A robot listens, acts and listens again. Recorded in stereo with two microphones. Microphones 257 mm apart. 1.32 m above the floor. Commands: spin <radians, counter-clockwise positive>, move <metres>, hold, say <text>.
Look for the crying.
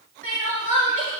spin 0.87
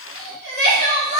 spin 1.31
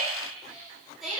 say Facing the crying.